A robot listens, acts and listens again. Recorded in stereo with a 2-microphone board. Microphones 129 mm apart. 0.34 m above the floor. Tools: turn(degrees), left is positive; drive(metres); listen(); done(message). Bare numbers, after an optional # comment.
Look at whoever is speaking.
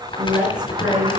turn(-30)
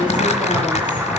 listen()
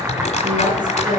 # So it is at 140° right.
turn(-140)
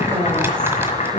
# The woman speaking is now 15° right.
turn(-15)
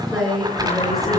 done("Found it: a woman speaking, straight ahead.")